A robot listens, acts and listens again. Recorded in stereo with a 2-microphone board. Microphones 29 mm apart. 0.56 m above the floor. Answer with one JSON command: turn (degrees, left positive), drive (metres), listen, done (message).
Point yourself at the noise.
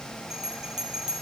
{"turn": -20}
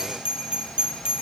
{"turn": -140}
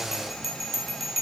{"done": "Facing the bell."}